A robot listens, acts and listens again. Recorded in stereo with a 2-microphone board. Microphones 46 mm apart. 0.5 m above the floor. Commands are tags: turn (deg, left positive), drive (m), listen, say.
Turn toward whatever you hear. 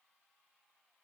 <listen/>
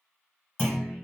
<turn deg="50"/>
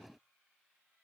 <listen/>
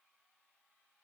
<say>I heard a clunk, but can't make it out now. It was about straight ahead or 80° left.</say>